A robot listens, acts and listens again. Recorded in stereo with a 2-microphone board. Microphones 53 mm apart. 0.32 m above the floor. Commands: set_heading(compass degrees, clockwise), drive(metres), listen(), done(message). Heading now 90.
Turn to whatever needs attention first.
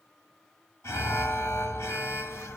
set_heading(30)
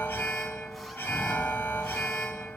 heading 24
set_heading(339)
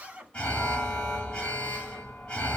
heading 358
set_heading(338)
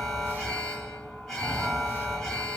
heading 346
done("Found it: an alarm, straight ahead, 1 to 2 m away.")